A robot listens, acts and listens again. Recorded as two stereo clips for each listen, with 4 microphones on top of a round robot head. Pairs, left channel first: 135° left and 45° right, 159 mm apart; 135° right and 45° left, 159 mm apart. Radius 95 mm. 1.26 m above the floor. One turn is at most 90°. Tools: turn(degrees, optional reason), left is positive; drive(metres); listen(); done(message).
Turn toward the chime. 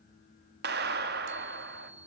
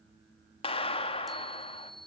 turn(degrees=-45, reason="The chime: 45° right.")
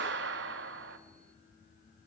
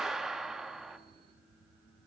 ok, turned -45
listen()
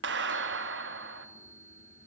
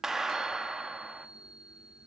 turn(degrees=-10, reason="The chime is now 10° right.")
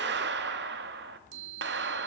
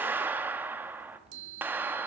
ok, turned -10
done("Facing the chime, 1 to 2 m away.")